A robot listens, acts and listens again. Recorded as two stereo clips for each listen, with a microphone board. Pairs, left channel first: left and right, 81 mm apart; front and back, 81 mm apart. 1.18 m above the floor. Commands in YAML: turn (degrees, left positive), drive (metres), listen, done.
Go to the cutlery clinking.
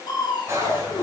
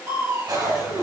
turn: -145
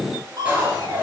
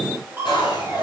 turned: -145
turn: -20
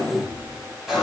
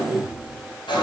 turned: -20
drive: 1.0
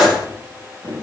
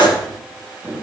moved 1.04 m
drive: 1.0
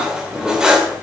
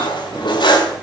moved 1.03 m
turn: -10
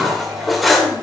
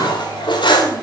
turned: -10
drive: 1.0
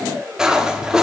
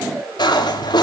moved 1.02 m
turn: -10
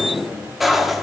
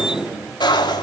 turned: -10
drive: 1.0
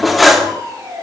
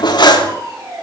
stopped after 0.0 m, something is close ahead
done: "I am next to the cutlery clinking."